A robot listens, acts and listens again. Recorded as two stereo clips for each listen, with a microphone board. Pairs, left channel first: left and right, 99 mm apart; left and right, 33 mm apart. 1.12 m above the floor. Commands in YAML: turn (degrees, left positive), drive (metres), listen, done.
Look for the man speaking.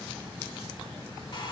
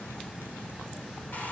listen: true
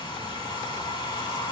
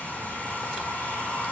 listen: true
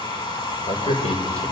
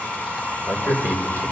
turn: 90
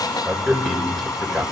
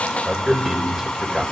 done: "Found it: a man speaking, straight ahead, over 4 m away."